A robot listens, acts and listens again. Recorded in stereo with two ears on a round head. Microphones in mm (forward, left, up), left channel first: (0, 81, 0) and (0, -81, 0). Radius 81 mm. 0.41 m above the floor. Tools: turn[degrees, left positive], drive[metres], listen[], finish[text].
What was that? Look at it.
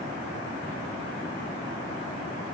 Action: listen[]
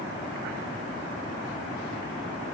Action: listen[]
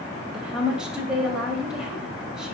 Action: turn[-30]
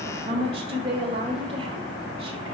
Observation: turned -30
Thought: So it is at 140° right.
Action: turn[-140]
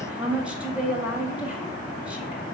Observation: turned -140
Thought: The woman speaking is now 10° right.
Action: turn[-10]
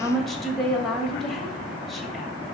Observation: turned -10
Action: finish[Found it: a woman speaking, straight ahead, 1 to 2 m away.]